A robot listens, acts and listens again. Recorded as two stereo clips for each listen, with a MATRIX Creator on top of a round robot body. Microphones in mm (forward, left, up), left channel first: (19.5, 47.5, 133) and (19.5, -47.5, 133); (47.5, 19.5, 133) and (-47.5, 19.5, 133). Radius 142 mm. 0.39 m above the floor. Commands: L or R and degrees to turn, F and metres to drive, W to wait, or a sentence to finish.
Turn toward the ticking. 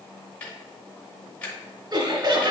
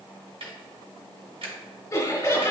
L165
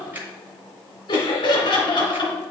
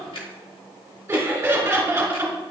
R20
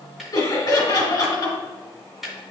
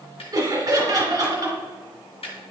Facing the ticking.